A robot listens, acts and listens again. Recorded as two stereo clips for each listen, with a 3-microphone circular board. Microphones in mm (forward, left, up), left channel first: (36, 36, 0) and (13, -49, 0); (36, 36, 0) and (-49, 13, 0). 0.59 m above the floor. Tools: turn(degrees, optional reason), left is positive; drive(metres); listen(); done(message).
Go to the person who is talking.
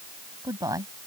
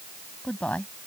turn(degrees=-60, reason="The woman speaking: 60° right.")
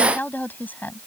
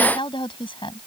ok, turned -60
drive(metres=1.0)
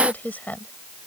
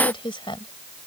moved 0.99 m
drive(metres=1.0)
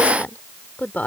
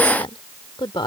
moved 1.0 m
drive(metres=1.0)
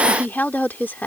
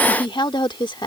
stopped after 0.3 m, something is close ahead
turn(degrees=10, reason="The woman speaking is now 10° left.")
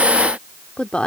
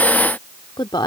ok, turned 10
done("Arrived at the woman speaking, straight ahead.")